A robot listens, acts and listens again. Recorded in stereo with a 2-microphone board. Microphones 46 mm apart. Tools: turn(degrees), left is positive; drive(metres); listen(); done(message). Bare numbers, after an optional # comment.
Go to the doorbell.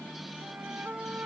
listen()
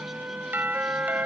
# The doorbell: about 45° right or 135° right.
turn(-45)
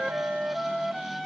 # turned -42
listen()
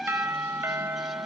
# So it is at 90° right.
turn(-90)
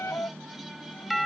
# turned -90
drive(1.0)
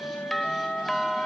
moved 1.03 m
drive(1.0)
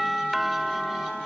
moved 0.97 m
drive(1.0)
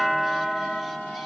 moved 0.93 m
drive(1.0)
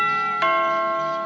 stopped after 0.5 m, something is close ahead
done("I am next to the doorbell.")